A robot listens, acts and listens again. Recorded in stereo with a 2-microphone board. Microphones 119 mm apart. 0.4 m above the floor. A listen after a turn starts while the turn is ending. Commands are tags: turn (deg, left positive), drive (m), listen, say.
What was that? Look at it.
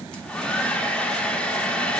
<turn deg="30"/>
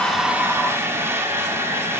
<turn deg="-20"/>
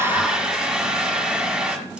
<turn deg="-10"/>
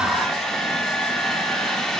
<say>Found it: a hair dryer, straight ahead, 1 to 2 m away.</say>